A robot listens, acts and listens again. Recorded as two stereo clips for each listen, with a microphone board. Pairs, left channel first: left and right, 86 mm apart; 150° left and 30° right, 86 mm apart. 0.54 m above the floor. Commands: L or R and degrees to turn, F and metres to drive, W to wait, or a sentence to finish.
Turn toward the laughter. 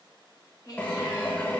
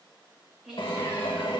L50
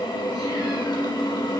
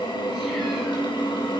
W
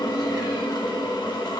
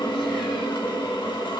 W
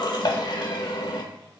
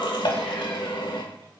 Facing where the laughter came from. I can't hear it now.